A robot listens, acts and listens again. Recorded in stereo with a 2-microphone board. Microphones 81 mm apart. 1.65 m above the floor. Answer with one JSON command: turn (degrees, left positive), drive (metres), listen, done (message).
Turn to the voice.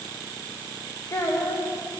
{"turn": 35}
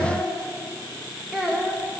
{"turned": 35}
{"done": "Found it: a child speaking, straight ahead."}